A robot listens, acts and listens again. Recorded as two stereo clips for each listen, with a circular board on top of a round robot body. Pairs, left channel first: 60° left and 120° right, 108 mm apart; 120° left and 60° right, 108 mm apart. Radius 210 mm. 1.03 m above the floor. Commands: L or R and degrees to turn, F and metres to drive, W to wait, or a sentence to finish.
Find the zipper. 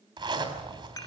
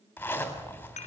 R165
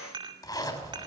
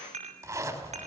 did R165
Found it: a zipper, straight ahead, 2 to 4 m away.